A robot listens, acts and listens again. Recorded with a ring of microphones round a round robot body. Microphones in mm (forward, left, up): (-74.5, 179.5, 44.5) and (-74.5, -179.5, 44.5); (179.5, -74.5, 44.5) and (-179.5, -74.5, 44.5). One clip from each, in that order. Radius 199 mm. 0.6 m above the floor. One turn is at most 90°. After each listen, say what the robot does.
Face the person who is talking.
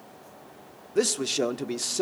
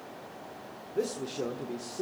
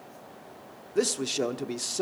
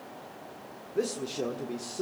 Turn 50° left.
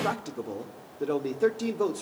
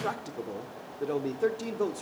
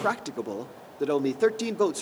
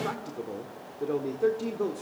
Facing the man speaking.